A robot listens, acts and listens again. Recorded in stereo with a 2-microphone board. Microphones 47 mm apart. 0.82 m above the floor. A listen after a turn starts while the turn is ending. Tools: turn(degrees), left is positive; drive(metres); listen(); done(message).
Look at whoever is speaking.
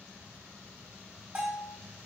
listen()
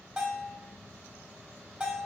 listen()
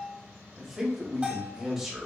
turn(degrees=-30)
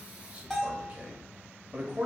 turn(degrees=-145)
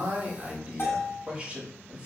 turn(degrees=-30)
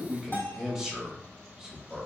turn(degrees=-15)
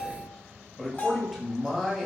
done("Facing the man speaking, 1 to 2 m away.")